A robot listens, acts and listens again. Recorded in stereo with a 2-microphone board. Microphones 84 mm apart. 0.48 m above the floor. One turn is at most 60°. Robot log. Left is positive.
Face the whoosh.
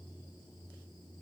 cmd idle
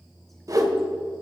note: The whoosh: about 45° right or 135° right.
cmd yaw -45
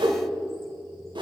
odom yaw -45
note: So it is at 90° right.
cmd yaw -60
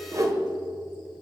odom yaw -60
note: The whoosh is now 45° right.
cmd yaw -45
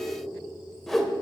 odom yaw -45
end: Facing the whoosh.